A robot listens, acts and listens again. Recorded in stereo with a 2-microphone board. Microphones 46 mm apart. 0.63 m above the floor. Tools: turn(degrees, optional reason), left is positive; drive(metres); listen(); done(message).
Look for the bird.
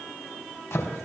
listen()
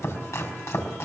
listen()
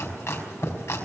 done("I can't make out a bird, only chopping.")